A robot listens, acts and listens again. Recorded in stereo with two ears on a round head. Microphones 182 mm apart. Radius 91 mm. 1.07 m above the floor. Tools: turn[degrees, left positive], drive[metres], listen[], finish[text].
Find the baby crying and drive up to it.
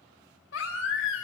Thought: The baby crying: about 70° left or 110° left.
Action: turn[70]
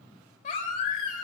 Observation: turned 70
Thought: So it is at 40° left.
Action: turn[40]
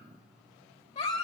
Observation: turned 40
Thought: The baby crying is now 35° left.
Action: turn[35]
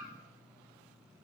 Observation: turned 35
Action: listen[]
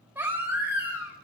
Thought: The baby crying is now 10° right.
Action: turn[-10]
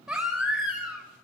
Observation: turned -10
Action: drive[1.0]
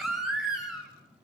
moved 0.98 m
Action: drive[1.0]
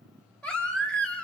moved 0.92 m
Action: drive[1.0]
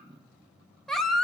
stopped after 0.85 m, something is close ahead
Action: finish[Arrived at the baby crying, straight ahead.]